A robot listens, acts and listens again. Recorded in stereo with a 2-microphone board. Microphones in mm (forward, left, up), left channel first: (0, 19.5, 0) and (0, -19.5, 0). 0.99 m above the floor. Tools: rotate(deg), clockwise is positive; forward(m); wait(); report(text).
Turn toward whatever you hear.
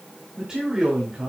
rotate(30)
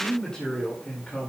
rotate(-30)
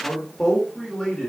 rotate(-20)
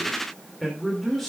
rotate(-10)
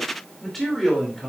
rotate(-10)
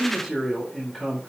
report("Found it: a man speaking, straight ahead, over 4 m away.")